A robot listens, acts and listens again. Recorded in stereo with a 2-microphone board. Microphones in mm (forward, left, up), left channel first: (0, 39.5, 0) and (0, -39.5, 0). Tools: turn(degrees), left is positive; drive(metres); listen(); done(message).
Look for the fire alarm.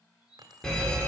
turn(degrees=30)
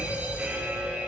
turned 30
turn(degrees=-20)
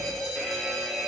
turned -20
done("Facing the fire alarm, 2 to 4 m away.")